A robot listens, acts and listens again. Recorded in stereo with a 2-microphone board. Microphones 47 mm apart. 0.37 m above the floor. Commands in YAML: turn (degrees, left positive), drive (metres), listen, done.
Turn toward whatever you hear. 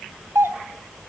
turn: -65
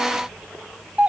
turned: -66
turn: -30
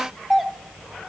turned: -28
done: "Found it: a doorbell, straight ahead, 2 to 4 m away."